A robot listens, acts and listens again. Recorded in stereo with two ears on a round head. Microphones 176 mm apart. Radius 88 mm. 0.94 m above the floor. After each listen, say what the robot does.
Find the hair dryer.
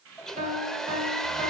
Turn 30° left.
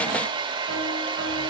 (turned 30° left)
Turn 30° right.
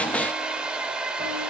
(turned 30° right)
Found it: a hair dryer, straight ahead, under 1 m away.